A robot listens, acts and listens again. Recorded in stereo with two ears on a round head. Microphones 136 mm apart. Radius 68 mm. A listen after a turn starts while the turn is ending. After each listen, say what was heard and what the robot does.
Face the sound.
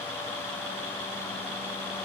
Keep listening.
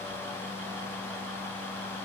Keep listening.
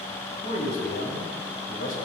The man speaking: about 65° left or 115° left. Turn 65° left.
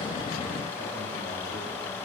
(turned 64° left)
Keep listening.
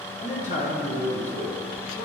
So it is at 55° left. Turn 55° left.
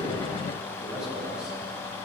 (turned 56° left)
Keep listening.
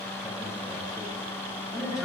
Facing the man speaking.